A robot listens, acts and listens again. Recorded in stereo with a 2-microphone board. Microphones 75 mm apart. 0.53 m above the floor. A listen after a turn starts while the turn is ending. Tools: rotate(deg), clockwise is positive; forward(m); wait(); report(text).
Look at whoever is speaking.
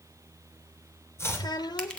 rotate(-70)
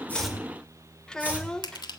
rotate(-10)
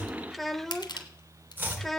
report("Found it: a child speaking, straight ahead, under 1 m away.")